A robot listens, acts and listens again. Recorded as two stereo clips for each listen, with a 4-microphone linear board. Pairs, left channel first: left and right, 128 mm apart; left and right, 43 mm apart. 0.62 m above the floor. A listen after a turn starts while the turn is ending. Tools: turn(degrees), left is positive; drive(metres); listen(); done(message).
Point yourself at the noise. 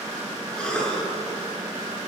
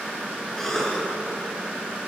turn(degrees=30)
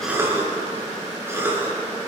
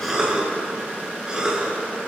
turn(degrees=-20)
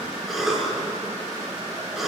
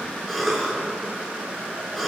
done("Found it: a cough, straight ahead.")